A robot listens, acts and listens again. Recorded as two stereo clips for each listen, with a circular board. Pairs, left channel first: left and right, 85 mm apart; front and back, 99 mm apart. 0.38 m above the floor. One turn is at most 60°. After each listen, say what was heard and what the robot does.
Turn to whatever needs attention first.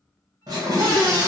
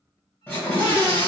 The scream: 75° right. Turn 60° right.
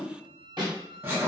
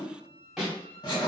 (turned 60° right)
The scream is now 35° right. Turn 35° right.
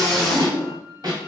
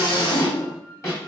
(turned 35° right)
Found it: a scream, straight ahead, 1 to 2 m away.